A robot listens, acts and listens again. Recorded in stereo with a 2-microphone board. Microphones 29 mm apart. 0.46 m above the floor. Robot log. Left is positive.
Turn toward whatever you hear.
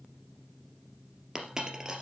note: The dropped coin: about 25° right or 155° right.
cmd yaw -25
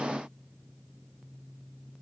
cmd idle
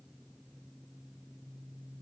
end: I heard a dropped coin, but can't make it out now. It was about straight ahead or 130° right.